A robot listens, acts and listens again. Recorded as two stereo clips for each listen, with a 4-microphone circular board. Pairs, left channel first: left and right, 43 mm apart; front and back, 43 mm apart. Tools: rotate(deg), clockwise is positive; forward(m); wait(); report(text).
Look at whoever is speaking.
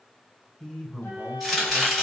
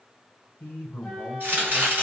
rotate(-10)
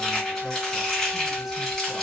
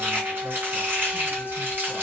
wait()
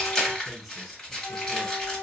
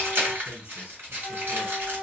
report("Found it: a man speaking, straight ahead.")